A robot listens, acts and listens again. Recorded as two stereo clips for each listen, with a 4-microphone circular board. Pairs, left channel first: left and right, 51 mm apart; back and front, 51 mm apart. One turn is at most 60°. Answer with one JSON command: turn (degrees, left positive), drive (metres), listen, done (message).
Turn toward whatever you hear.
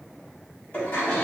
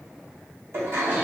{"turn": 35}
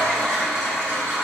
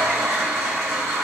{"done": "Facing the toilet flushing, 1 to 2 m away."}